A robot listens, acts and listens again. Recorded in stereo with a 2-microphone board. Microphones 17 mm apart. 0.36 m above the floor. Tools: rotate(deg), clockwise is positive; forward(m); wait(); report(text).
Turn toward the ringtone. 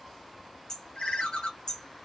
rotate(-90)
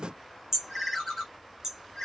report("Facing the ringtone.")